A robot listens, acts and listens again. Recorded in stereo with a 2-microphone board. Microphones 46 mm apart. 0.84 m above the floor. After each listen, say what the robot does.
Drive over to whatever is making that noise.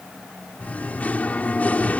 Turn 35° left.
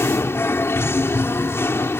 Turn 110° left.
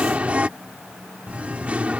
Turn 30° right.
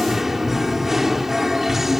Drive 1.0 m forward.
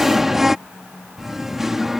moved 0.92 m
Drive 1.0 m forward.
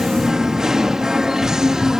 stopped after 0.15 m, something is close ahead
Turn 15° right.
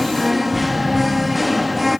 Arrived at the singing, straight ahead.